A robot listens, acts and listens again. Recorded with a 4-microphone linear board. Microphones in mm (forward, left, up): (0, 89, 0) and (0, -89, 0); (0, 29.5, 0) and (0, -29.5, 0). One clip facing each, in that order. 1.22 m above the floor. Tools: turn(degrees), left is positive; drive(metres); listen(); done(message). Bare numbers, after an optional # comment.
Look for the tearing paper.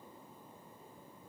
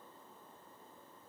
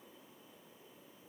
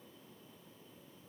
listen()
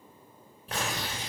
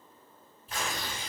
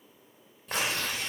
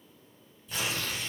# The tearing paper: about 75° left or 105° left.
turn(75)
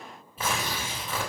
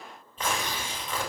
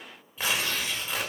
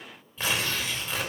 done("Facing the tearing paper, 2 to 4 m away.")